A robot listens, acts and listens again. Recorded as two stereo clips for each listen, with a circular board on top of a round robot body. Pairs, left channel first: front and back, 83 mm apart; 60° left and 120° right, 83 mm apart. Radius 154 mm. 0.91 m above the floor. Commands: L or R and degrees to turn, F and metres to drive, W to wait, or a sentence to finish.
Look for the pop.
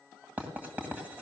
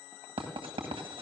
W
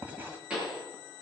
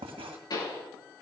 L100
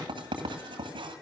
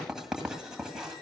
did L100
I heard a pop from this way, but can't make it out now.